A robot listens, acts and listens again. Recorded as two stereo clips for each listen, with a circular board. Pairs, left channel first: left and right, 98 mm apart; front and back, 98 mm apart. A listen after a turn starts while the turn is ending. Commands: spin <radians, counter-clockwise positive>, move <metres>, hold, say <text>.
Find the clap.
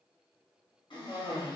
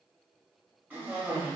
hold
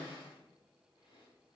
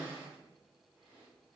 hold
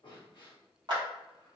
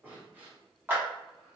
spin -2.01
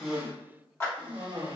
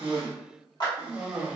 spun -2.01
spin 0.52
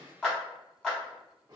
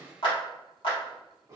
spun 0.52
spin 0.17
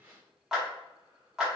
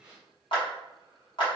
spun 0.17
say Facing the clap.